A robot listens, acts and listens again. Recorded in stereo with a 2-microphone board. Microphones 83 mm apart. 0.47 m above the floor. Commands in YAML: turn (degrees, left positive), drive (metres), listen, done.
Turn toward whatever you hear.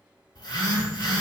turn: 65
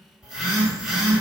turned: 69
done: "Found it: a phone buzzing, straight ahead."